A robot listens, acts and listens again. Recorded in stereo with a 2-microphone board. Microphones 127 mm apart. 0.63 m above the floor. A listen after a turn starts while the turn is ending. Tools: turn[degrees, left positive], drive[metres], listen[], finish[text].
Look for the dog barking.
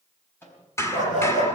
Action: turn[90]
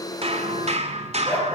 Thought: So it is at 15° right.
Action: turn[-15]
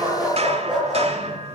Action: finish[Found it: a dog barking, straight ahead.]